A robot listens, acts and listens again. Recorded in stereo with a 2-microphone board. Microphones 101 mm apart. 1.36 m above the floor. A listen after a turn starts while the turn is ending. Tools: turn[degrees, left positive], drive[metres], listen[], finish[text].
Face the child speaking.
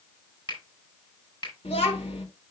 Action: turn[90]
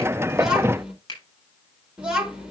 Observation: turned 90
Thought: So it is at 10° right.
Action: turn[-10]
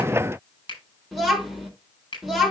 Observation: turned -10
Action: finish[Facing the child speaking.]